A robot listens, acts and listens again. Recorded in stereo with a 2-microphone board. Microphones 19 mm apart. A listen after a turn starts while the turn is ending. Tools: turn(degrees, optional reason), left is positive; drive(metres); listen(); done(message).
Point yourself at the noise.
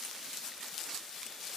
listen()
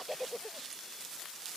listen()
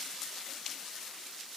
done("I can't make out anything to turn to.")